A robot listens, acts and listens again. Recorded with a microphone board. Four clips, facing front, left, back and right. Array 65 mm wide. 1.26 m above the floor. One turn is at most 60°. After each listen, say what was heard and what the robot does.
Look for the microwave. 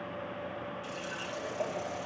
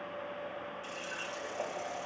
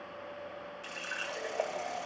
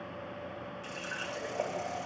Keep listening.
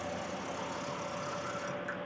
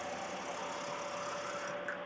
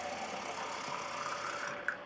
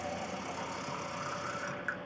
Keep listening.
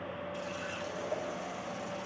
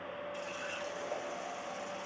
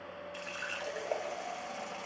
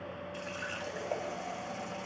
I can't make out a microwave to turn to.